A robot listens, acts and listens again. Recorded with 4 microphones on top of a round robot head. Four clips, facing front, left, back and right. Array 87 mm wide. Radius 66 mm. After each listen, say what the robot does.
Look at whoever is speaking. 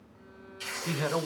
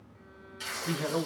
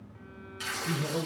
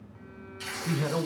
Turn 10° right.
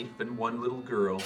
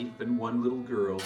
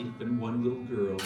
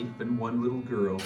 Found it: a man speaking, straight ahead, 1 to 2 m away.